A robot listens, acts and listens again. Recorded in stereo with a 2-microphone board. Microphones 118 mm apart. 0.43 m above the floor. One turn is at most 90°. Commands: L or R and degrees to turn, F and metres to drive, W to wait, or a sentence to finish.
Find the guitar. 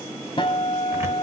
L45
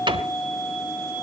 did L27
L20
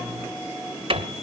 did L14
W
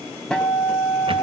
Facing the guitar.